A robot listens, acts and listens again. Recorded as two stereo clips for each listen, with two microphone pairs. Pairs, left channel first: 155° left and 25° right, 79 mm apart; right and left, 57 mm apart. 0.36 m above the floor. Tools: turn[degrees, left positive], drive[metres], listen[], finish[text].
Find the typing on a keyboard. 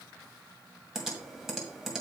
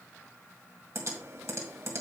Thought: The typing on a keyboard: 60° left.
Action: turn[60]
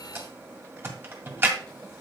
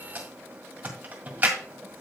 Thought: The typing on a keyboard is now 30° left.
Action: turn[30]
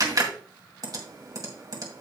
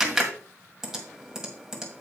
Action: finish[Found it: typing on a keyboard, straight ahead, 1 to 2 m away.]